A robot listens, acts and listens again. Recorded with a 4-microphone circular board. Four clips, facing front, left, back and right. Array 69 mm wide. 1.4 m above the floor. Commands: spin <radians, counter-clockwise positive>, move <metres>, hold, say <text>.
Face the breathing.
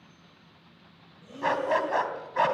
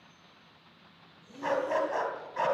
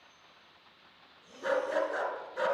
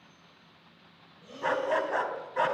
spin -0.96
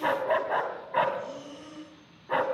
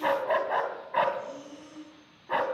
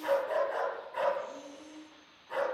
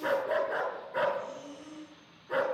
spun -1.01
say Facing the breathing, over 4 m away.